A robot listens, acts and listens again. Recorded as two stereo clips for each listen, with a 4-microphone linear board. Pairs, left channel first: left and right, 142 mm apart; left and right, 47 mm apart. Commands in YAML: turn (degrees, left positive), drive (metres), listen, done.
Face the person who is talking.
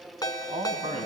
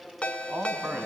turn: -55
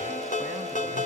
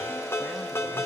listen: true
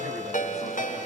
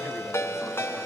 listen: true
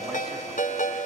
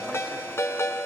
done: "I heard a man speaking, but can't make it out now. It was about straight ahead or 70° right."